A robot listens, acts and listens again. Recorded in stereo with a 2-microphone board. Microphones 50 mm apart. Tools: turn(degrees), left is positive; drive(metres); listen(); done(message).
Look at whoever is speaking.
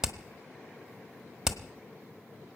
listen()
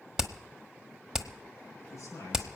turn(degrees=65)
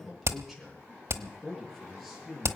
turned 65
done("Found it: a man speaking, straight ahead.")